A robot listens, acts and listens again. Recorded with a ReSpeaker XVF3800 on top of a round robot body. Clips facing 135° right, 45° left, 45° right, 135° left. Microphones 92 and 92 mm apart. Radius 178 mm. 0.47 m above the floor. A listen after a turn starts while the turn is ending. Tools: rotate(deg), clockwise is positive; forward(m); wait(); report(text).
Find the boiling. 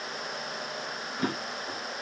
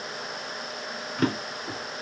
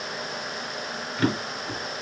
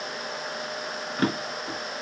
wait()
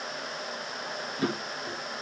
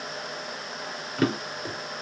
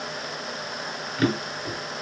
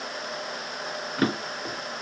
wait()
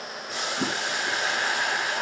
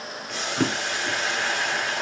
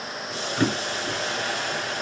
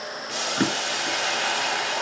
rotate(-140)
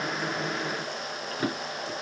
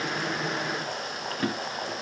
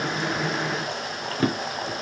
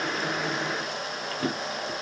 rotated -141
wait()
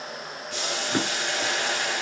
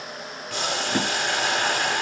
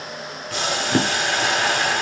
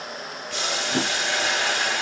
report("Found it: boiling, straight ahead, 1 to 2 m away.")